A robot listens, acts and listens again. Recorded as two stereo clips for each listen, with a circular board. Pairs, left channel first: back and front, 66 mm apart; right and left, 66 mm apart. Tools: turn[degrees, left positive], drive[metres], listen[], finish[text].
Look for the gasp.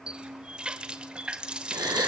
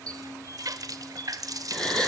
Thought: The gasp: 15° right.
Action: turn[-15]
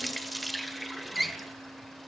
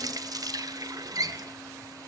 Action: finish[I heard a gasp from this way, but can't make it out now.]